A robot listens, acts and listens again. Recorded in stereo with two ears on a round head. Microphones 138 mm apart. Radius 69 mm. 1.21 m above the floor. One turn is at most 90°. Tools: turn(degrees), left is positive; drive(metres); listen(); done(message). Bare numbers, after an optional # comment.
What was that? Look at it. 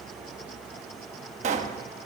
# The pop: about 50° right or 130° right.
turn(-50)
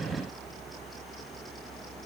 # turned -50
listen()
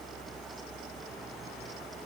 done("I heard a pop, but can't make it out now. It was about straight ahead or 80° right.")